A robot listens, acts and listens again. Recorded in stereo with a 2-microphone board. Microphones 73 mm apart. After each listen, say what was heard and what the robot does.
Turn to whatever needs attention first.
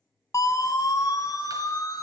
The siren: about 50° left or 130° left. Turn 50° left.
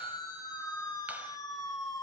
So it is at 70° left. Turn 70° left.
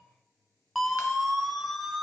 Facing the siren.